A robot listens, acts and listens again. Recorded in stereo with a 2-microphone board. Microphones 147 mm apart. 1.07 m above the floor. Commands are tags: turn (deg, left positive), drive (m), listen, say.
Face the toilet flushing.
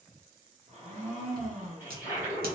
<turn deg="-15"/>
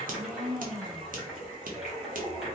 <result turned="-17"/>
<say>Found it: a toilet flushing, straight ahead, 1 to 2 m away.</say>